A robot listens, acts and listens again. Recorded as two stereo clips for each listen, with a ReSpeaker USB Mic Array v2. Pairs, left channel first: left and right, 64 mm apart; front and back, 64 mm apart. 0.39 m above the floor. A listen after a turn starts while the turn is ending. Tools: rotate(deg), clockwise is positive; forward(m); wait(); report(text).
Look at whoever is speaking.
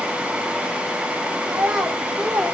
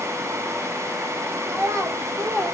rotate(170)
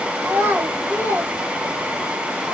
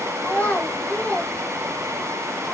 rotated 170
rotate(60)
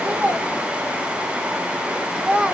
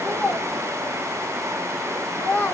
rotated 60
rotate(25)
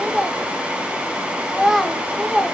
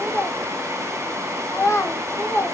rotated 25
report("Facing the child speaking, 1 to 2 m away.")